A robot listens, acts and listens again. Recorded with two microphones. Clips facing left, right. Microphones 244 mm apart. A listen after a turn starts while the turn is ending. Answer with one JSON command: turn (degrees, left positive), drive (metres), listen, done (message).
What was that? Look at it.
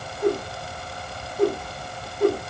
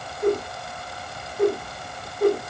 {"turn": 40}
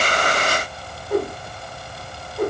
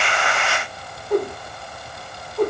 {"done": "Facing the whoosh."}